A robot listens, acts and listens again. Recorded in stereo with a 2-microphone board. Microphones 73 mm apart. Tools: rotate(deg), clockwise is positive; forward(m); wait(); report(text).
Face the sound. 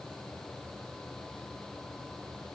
wait()
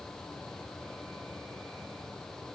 wait()
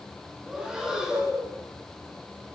rotate(30)
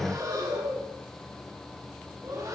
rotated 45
rotate(130)
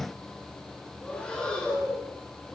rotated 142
rotate(-10)
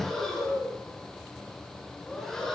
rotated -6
report("Found it: breathing, straight ahead, over 4 m away.")